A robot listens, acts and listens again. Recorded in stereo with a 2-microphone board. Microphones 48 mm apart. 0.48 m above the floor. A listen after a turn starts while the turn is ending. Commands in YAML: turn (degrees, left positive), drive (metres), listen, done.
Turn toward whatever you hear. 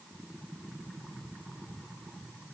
listen: true
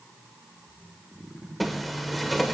turn: 30
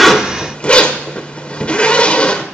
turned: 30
turn: 150
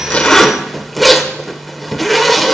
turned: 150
done: "Found it: a zipper, straight ahead."